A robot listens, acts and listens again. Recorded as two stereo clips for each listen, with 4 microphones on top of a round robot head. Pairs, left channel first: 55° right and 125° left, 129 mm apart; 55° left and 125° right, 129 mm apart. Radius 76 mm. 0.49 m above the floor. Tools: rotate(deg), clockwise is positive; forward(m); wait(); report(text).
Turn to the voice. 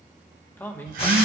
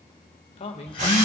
rotate(-20)
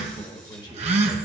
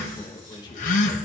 report("Found it: a man speaking, straight ahead.")